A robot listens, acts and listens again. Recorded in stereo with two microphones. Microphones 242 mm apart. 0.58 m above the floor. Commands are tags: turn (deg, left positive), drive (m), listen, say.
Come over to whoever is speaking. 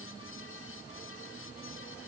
<listen/>
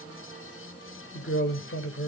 <turn deg="55"/>
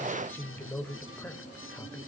<turn deg="10"/>
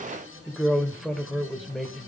<drive m="1.0"/>
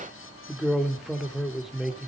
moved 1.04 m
<drive m="1.0"/>
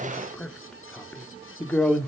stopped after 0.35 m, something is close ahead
<say>Arrived at the man speaking, straight ahead.</say>